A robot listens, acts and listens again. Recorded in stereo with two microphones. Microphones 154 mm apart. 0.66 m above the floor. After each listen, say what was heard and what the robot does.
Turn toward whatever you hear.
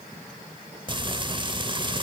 The frying: about 30° right or 150° right. Turn 30° right.
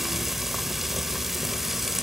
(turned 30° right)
Facing the frying.